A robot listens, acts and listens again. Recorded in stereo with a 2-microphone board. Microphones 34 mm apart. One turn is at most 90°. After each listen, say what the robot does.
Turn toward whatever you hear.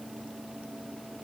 Keep listening.
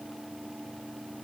Keep listening.
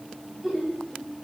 Turn 30° right.
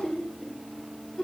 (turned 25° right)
Turn 15° left.
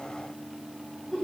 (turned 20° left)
Facing the laughter.